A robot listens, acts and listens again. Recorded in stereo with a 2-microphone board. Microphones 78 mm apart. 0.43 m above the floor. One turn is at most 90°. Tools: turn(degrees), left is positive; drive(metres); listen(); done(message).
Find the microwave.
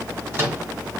turn(degrees=-25)
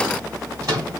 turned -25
turn(degrees=-90)
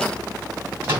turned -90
turn(degrees=-30)
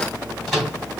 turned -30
done("Found it: a microwave, straight ahead.")